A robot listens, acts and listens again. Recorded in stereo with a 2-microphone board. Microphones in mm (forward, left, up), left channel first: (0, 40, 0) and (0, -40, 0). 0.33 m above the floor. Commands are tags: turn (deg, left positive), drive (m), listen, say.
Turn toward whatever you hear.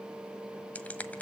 <turn deg="20"/>
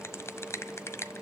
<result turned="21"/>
<turn deg="135"/>
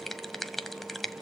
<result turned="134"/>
<say>Found it: a finger snap, straight ahead.</say>